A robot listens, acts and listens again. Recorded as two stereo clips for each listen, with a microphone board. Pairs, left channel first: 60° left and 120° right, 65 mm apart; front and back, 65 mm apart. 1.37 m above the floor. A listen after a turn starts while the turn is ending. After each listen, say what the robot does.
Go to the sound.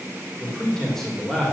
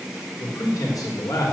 Turn 25° right.
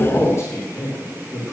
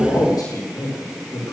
Turn 15° left.
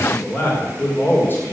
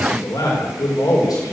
Drive 1.0 m forward.
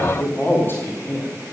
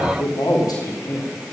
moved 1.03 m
Drive 1.0 m forward.
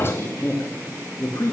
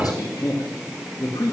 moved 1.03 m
Turn 10° left.
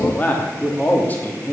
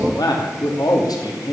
Drive 1.0 m forward.
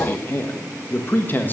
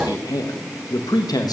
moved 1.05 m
Drive 1.0 m forward.
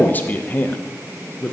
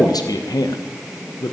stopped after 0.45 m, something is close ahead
Arrived at the man speaking, straight ahead.